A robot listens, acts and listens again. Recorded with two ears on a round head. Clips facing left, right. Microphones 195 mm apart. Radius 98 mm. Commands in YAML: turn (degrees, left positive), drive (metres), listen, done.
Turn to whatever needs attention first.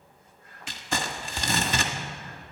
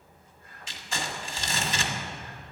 listen: true
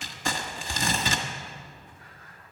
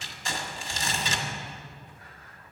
listen: true
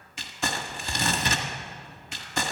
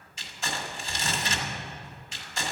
done: "I can't make out anything urgent to turn to."